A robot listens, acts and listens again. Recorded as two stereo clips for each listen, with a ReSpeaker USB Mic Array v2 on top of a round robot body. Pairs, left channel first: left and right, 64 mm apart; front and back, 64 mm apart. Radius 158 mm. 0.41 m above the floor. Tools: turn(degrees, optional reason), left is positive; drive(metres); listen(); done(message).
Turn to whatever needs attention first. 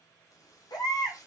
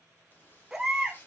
turn(degrees=100, reason="The baby crying: 100° left.")
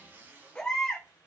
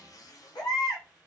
turn(degrees=15, reason="The baby crying is now 15° left.")
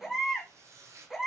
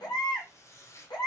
done("Found it: a baby crying, straight ahead.")